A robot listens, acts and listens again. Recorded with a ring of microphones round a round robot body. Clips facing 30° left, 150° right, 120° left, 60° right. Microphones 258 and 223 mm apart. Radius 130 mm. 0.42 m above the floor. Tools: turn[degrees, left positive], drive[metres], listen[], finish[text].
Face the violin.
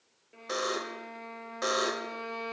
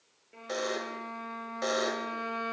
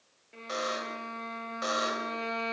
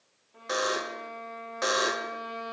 Thought: The violin: 125° left.
Action: turn[125]
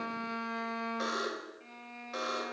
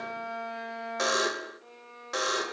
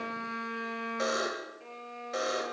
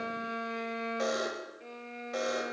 Thought: The violin is now 10° left.
Action: turn[10]
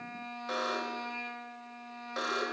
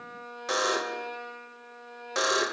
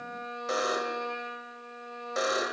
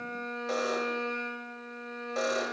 Action: finish[Found it: a violin, straight ahead.]